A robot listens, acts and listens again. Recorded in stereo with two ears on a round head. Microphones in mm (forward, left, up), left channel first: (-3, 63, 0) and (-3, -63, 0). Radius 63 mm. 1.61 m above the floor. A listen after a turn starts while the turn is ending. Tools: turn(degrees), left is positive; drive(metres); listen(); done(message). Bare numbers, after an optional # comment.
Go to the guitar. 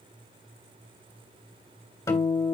# The guitar: about 25° left or 155° left.
turn(25)
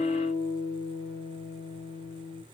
# So it is at 125° left.
turn(125)
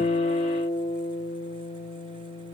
# The guitar is now 35° left.
turn(35)
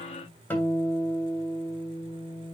# The guitar is now 15° left.
turn(15)
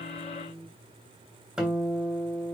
drive(1.0)
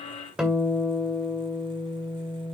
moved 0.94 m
# The guitar is now 10° right.
turn(-10)
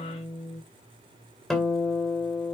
drive(1.0)
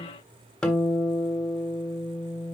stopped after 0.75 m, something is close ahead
# The guitar is now 10° left.
turn(10)
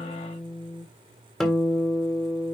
done("I am next to the guitar.")